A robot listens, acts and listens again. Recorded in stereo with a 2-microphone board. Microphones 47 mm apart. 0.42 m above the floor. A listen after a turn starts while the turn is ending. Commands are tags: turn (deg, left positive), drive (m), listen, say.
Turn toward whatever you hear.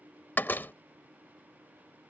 <turn deg="45"/>
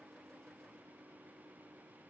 <listen/>
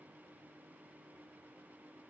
<say>I heard a door slam, but can't make it out now. It was about straight ahead or 90° left.</say>